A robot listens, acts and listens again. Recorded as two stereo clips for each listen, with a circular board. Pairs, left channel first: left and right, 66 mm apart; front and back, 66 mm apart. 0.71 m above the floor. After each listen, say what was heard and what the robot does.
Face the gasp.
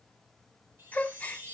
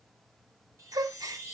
The gasp: 160° left. Turn 160° left.
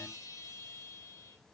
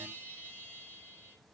I heard a gasp from this way, but can't make it out now.